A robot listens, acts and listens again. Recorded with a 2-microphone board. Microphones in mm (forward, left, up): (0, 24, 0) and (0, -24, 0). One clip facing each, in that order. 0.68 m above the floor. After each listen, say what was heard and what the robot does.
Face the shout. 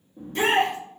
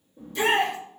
The shout: about 45° left or 135° left. Turn 45° left.
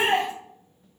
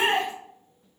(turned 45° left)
So it is at 10° left. Turn 10° left.
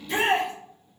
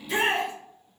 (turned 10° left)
Facing the shout, 1 to 2 m away.